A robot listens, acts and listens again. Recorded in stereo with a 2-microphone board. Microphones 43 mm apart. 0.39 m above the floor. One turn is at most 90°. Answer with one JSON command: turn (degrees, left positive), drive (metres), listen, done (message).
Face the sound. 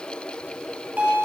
{"turn": -35}
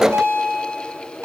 {"turn": -90}
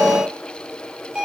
{"turn": -20}
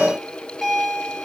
{"done": "Found it: a bell, straight ahead, over 4 m away."}